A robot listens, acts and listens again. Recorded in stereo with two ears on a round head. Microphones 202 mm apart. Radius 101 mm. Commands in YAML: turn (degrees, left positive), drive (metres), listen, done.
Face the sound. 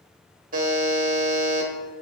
turn: -35
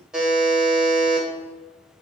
done: "Facing the buzzer, 1 to 2 m away."